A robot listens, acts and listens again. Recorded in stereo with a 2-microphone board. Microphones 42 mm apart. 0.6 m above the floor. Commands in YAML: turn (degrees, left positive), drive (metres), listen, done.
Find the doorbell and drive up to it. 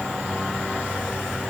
listen: true
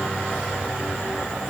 listen: true
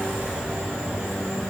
done: "I can't make out a doorbell."